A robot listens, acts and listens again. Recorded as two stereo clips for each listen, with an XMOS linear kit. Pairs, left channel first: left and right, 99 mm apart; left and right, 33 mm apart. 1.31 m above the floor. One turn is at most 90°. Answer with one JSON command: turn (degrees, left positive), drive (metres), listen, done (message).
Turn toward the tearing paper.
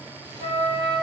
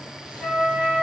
{"listen": true}
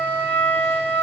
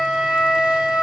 {"listen": true}
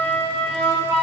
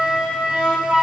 {"done": "I can't make out tearing paper, only a flute."}